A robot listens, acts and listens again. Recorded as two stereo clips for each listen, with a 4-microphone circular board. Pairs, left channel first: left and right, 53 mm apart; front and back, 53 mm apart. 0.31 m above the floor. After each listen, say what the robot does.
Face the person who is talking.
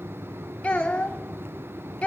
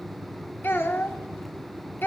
Turn 30° left.
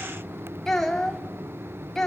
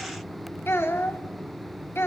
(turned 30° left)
Turn 10° left.
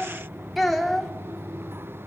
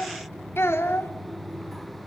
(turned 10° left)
Found it: a child speaking, straight ahead.